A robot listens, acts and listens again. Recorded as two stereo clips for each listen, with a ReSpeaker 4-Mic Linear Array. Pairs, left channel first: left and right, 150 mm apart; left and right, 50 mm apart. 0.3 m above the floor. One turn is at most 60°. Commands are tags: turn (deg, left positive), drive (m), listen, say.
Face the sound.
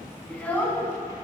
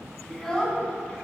<turn deg="20"/>
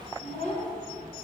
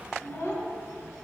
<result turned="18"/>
<turn deg="60"/>
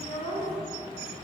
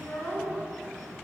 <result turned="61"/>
<turn deg="35"/>
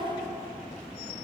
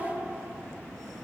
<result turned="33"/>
<say>Found it: a child speaking, straight ahead, 2 to 4 m away.</say>